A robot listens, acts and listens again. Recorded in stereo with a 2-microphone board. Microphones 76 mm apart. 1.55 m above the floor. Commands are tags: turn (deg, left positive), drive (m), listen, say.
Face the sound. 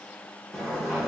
<turn deg="30"/>
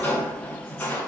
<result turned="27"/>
<turn deg="155"/>
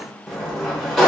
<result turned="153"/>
<say>Found it: a sliding door, straight ahead, 1 to 2 m away.</say>